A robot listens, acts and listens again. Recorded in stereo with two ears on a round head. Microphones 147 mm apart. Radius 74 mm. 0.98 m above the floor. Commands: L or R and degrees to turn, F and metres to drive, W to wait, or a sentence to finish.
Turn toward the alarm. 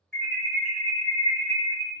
L30
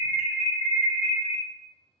L145
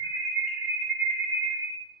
Found it: an alarm, straight ahead.